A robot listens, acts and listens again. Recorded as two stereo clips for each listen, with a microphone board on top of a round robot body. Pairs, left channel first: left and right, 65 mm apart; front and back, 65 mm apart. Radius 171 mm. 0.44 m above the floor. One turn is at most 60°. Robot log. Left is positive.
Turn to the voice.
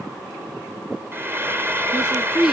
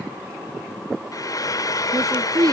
note: The woman speaking: 170° right.
cmd yaw -60
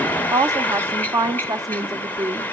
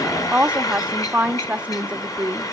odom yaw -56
note: The woman speaking is now 115° right.
cmd yaw -60
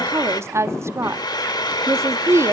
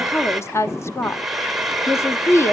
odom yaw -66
note: The woman speaking is now 45° right.
cmd yaw -45
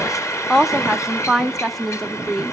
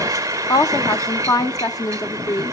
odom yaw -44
end: Found it: a woman speaking, straight ahead.